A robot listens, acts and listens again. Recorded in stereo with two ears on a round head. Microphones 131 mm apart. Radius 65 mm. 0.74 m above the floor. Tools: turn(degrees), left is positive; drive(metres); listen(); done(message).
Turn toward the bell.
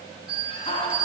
turn(degrees=-35)
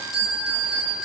done("Facing the bell.")